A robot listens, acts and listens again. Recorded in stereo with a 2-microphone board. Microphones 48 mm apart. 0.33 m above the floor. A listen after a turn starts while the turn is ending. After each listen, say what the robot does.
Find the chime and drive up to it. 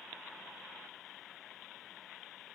Keep listening.
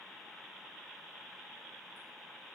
Keep listening.
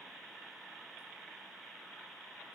I can't make out a chime.